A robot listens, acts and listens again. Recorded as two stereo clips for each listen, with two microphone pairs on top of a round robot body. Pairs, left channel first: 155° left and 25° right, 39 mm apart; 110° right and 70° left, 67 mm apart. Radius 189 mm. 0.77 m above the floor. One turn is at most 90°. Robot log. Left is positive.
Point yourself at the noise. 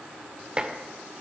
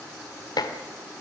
note: The dishes clattering: 95° right.
cmd yaw -90
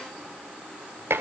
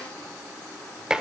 note: The dishes clattering is now 10° right.
cmd yaw -10
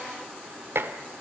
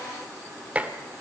end: Found it: dishes clattering, straight ahead, 1 to 2 m away.